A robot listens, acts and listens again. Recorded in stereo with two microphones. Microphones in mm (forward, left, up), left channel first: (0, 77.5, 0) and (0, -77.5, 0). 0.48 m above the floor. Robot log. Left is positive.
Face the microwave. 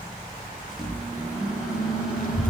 cmd yaw -30
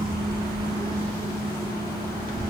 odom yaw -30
note: So it is at 25° left.
cmd yaw +25
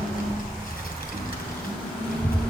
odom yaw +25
end: Found it: a microwave, straight ahead.